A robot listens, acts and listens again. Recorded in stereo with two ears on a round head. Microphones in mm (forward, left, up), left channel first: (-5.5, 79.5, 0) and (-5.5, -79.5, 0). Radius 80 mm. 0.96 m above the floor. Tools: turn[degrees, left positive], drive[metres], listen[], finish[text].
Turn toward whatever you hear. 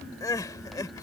Thought: The crying: about 20° left or 160° left.
Action: turn[20]
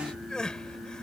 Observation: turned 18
Action: finish[Facing the crying.]